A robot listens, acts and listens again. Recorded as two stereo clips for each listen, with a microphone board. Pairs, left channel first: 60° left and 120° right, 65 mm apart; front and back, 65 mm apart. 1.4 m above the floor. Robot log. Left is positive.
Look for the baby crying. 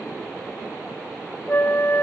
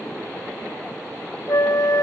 cmd idle
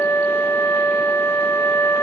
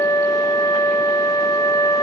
cmd idle
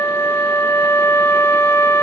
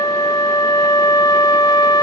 end: I can't make out a baby crying, only a flute.